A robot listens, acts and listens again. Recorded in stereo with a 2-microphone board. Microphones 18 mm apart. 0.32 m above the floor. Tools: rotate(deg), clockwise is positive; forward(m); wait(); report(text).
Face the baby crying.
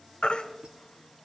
rotate(-70)
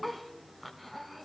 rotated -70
wait()
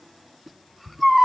report("Facing the baby crying.")